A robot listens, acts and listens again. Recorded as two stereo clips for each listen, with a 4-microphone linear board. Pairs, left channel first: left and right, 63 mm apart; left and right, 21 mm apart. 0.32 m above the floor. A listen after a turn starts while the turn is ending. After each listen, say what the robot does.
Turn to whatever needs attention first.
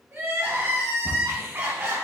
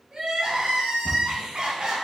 Turn 40° right.
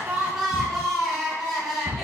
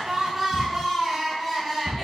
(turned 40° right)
Found it: crying, straight ahead, 1 to 2 m away.